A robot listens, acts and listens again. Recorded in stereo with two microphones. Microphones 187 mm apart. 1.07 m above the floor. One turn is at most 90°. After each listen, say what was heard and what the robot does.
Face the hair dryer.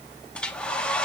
Turn 30° left.
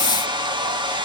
So it is at 25° right. Turn 25° right.
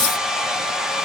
Found it: a hair dryer, straight ahead, 2 to 4 m away.